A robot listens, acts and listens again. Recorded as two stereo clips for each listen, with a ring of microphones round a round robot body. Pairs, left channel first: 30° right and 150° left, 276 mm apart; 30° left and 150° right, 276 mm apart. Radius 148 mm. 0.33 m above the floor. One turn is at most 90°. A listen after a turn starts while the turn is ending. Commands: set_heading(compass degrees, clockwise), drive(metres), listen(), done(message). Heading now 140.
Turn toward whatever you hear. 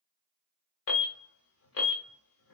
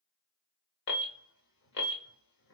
done("Found it: an alarm, straight ahead.")